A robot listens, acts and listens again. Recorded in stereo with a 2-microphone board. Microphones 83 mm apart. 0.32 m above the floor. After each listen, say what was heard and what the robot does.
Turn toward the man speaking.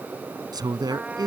The man speaking: about 55° right or 125° right. Turn 55° right.
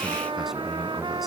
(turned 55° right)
Keep listening.
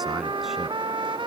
Keep listening.
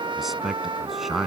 Found it: a man speaking, straight ahead.